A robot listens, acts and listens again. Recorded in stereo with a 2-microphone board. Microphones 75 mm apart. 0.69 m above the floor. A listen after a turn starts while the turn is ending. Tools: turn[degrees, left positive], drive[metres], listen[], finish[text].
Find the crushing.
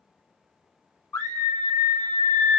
Action: listen[]
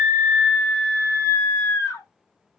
Action: listen[]
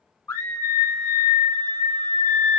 Action: finish[I can't make out crushing, only a scream.]